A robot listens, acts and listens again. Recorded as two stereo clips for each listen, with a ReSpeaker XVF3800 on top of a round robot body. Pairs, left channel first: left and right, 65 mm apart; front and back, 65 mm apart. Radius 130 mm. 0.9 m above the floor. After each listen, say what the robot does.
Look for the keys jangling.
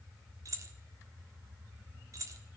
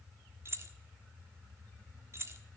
Turn 130° right.
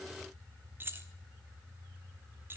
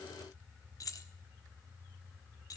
Turn 30° right.
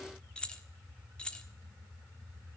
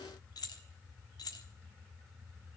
Turn 15° left.
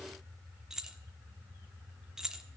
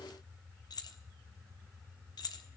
Turn 10° right.
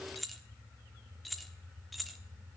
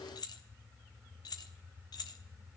Facing the keys jangling, 1 to 2 m away.